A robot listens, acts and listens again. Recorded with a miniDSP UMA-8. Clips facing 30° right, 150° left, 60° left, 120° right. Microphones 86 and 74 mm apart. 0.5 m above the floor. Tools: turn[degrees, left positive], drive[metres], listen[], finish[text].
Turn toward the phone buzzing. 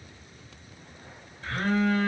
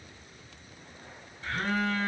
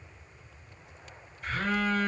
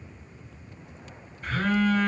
Thought: The phone buzzing: 75° right.
Action: turn[-75]
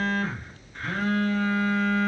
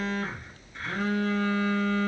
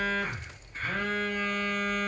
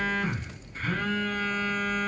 Action: finish[Found it: a phone buzzing, straight ahead.]